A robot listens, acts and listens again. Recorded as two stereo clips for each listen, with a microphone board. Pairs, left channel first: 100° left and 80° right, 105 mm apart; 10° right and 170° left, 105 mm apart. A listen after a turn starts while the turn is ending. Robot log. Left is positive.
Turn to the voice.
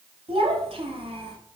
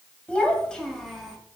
note: The child speaking: 100° right.
cmd yaw -100
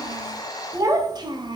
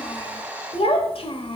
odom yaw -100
note: The child speaking is now 40° right.
cmd yaw -40
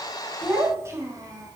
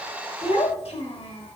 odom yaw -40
note: The child speaking is now 25° right.
cmd yaw -25
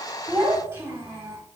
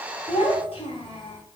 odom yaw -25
note: The child speaking is now 20° right.
cmd yaw -20
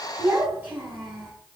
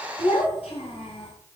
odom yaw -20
note: The child speaking is now 10° right.
cmd yaw -10
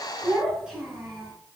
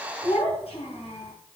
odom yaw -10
end: Found it: a child speaking, straight ahead.